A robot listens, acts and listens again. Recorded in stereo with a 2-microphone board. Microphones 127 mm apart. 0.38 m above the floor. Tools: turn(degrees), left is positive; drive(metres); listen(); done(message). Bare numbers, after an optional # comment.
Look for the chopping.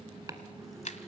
# The chopping: about 30° right or 150° right.
turn(-30)
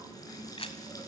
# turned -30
listen()
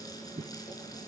# So it is at 120° right.
turn(-120)
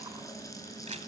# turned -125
listen()
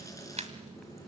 listen()
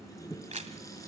done("Found it: chopping, straight ahead.")